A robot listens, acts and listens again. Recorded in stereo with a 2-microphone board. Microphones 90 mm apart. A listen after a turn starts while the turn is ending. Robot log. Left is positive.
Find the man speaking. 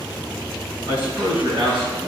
note: The man speaking: about 65° right or 115° right.
cmd yaw -65
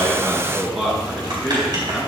end: Facing the man speaking, over 4 m away.